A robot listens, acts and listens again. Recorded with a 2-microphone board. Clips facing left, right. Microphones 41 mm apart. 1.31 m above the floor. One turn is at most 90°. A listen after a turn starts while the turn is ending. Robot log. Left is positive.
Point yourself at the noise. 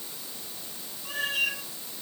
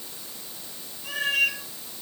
note: The cat meowing: about 75° right or 105° right.
cmd yaw -75
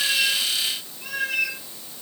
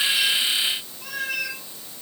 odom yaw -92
note: So it is at 10° left.
cmd yaw +10
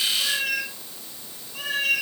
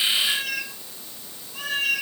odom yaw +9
end: Facing the cat meowing.